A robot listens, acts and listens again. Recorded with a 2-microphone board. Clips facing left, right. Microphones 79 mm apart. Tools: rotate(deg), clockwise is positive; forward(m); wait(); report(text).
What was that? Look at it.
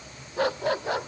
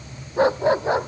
rotate(25)
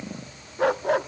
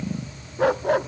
report("Found it: a dog barking, straight ahead.")